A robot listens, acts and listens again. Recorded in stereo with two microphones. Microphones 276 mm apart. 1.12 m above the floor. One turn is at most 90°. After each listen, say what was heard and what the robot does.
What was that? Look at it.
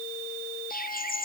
The bird: about 30° left or 150° left. Turn 30° left.
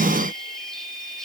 Keep listening.
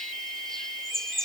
Found it: a bird, straight ahead.